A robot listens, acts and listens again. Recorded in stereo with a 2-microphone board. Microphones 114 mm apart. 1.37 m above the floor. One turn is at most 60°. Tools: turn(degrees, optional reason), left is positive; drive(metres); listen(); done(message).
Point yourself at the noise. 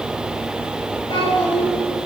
turn(degrees=45, reason="The child speaking: about 45° left or 135° left.")
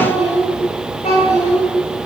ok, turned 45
turn(degrees=60, reason="So it is at 95° left.")
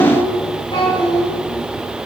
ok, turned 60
turn(degrees=50, reason="The child speaking is now 50° left.")
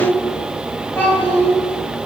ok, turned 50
turn(degrees=15, reason="The child speaking is now 15° left.")
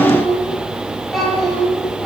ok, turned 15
done("Found it: a child speaking, straight ahead.")